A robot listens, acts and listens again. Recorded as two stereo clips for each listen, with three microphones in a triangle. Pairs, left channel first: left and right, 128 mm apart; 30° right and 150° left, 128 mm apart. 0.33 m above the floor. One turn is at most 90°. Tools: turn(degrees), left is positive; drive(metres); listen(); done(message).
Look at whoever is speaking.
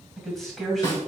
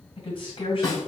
done("Found it: a man speaking, straight ahead, 1 to 2 m away.")